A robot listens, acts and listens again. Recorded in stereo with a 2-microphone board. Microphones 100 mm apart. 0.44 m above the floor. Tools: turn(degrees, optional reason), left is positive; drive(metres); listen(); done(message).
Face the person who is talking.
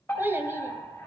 turn(degrees=-20, reason="The child speaking: about 20° right or 160° right.")
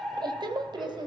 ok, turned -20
turn(degrees=-130, reason="So it is at 130° right.")
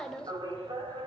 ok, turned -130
turn(degrees=10, reason="The child speaking is now 10° left.")
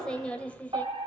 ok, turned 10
turn(degrees=15, reason="The child speaking is now 15° left.")
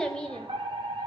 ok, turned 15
turn(degrees=10, reason="The child speaking is now 10° left.")
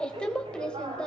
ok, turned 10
turn(degrees=10, reason="The child speaking is now 10° left.")
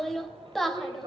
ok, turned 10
done("Facing the child speaking.")